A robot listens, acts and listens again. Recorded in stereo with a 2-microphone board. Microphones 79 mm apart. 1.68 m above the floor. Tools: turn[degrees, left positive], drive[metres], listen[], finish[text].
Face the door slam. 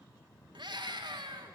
Action: listen[]
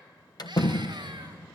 Thought: The door slam: about 55° left or 125° left.
Action: turn[55]
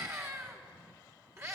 Action: listen[]
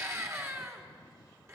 Action: finish[I heard a door slam, but can't make it out now. It was about straight ahead or 70° left.]